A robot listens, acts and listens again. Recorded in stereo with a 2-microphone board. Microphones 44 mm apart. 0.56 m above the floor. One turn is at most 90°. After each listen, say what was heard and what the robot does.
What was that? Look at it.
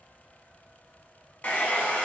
The hair dryer: about 35° left or 145° left. Turn 35° left.
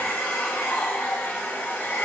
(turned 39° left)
So it is at 105° left. Turn 90° left.
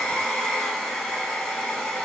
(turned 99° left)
Facing the hair dryer, under 1 m away.